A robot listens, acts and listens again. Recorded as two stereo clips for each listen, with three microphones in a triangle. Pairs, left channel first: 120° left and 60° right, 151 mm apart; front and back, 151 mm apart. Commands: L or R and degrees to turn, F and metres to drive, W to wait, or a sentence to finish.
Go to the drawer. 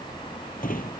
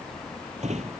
L140
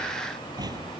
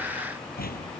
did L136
F1.0
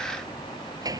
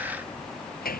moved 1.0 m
F1.0
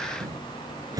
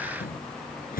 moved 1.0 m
F1.0
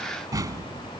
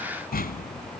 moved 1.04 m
F1.0
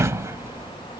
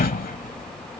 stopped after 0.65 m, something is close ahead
L10
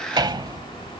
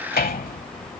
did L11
I am next to the drawer.